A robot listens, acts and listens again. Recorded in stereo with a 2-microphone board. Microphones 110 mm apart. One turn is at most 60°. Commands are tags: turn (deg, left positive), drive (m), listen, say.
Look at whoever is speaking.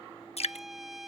<listen/>
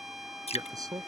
<turn deg="-30"/>
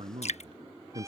<turn deg="-60"/>
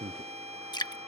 <turn deg="-60"/>
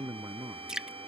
<turn deg="-30"/>
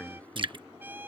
<turn deg="10"/>
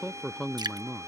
<say>Found it: a man speaking, straight ahead.</say>